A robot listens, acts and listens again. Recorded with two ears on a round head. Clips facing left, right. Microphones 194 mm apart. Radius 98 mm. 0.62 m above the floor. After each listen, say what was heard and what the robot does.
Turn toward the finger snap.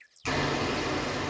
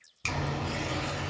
The finger snap: about 60° right or 120° right. Turn 60° right.
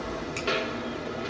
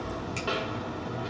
Keep listening.
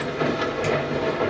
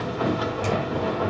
Keep listening.
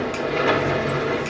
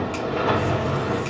I heard a finger snap, but can't make it out now. It was about straight ahead or 60° right.